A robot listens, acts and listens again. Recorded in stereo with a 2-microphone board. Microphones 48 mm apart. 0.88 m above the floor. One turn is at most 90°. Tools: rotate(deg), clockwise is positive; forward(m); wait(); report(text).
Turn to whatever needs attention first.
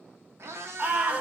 rotate(30)
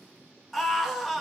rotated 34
report("Found it: a scream, straight ahead.")